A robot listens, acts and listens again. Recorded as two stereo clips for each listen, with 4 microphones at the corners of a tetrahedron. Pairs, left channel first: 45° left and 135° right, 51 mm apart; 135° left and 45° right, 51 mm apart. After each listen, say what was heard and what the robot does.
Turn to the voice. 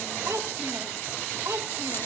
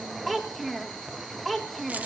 The child speaking: 135° right. Turn 135° right.
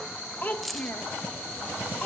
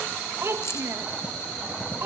The child speaking is now 15° right. Turn 15° right.
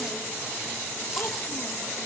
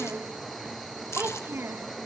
Keep listening.
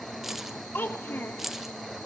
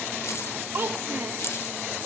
Facing the child speaking, 1 to 2 m away.